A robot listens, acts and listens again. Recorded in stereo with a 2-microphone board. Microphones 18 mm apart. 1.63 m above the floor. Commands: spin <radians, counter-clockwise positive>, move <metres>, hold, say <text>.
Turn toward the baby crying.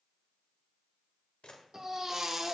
spin -0.52
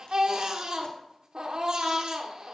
spin -2.01
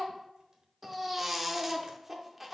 spin -0.17
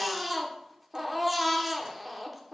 say Facing the baby crying, under 1 m away.